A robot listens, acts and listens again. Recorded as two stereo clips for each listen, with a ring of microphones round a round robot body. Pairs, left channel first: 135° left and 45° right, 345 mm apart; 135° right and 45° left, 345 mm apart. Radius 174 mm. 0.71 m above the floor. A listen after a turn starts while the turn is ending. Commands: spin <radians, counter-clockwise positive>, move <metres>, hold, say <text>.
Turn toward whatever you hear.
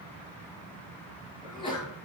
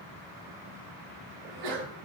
spin 1.05
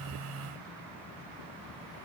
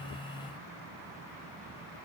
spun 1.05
say Facing where the sneeze came from. I can't hear it now.